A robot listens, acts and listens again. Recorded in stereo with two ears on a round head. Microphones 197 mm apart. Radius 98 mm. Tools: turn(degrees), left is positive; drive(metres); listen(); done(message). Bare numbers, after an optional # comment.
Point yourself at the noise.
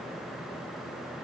listen()
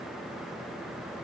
listen()
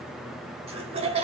# The laughter: about 25° right or 155° right.
turn(-25)
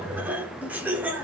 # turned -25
# So it is at 10° right.
turn(-10)
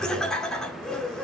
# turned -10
done("Facing the laughter, 1 to 2 m away.")